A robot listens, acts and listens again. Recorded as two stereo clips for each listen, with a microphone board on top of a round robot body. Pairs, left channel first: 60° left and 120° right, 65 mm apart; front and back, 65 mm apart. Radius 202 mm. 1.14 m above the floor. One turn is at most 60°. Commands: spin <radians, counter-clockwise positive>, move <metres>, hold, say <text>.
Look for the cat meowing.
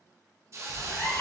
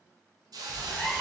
spin 1.05
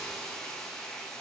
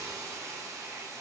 spin 0.17
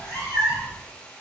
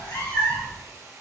spin 0.17
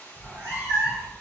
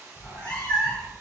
say Facing the cat meowing.